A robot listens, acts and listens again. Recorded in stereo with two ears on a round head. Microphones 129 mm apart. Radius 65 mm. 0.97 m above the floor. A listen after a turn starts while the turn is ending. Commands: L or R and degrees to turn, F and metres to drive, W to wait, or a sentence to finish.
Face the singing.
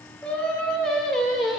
R30
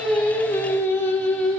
L30
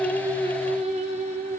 R55
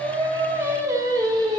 R30
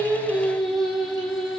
Found it: singing, straight ahead, 1 to 2 m away.